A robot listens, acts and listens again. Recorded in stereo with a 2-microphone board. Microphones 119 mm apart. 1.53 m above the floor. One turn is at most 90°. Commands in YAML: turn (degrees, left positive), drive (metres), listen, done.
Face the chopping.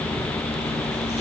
listen: true
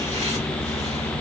listen: true
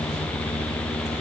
done: "I can't make out chopping."